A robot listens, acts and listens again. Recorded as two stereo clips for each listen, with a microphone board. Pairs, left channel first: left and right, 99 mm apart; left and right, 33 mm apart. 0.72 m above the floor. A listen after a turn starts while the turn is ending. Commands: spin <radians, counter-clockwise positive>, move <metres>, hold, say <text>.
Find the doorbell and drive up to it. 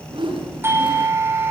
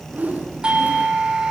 spin -0.44
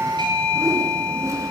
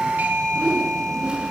spin -2.18
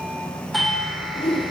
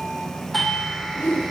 move 1.0
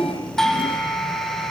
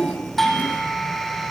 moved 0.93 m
move 1.0
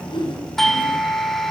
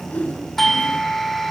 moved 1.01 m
move 1.0
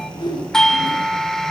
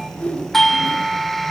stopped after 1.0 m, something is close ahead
spin 0.17
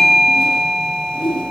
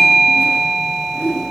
say I am next to the doorbell.